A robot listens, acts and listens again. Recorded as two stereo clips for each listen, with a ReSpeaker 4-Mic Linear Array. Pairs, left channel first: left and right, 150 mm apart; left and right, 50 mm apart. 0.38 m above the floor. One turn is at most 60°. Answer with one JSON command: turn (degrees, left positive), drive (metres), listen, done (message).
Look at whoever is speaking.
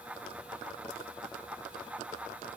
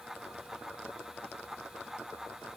{"listen": true}
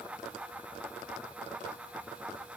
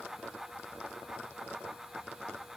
{"listen": true}
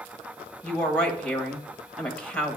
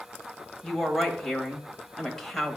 {"turn": 30}
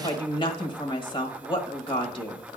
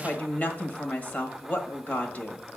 {"turn": 60}
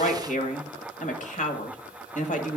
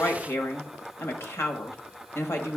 {"turn": 60}
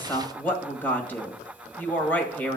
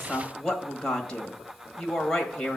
{"turn": 15}
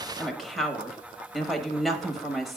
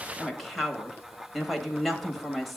{"done": "Found it: a woman speaking, straight ahead, 1 to 2 m away."}